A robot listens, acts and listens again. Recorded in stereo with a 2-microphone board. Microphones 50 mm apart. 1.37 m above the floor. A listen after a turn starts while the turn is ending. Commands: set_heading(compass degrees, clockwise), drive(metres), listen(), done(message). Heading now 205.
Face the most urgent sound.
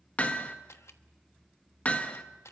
listen()
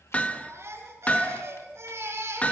set_heading(265)
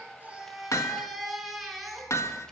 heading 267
done("Found it: a baby crying, straight ahead, over 4 m away.")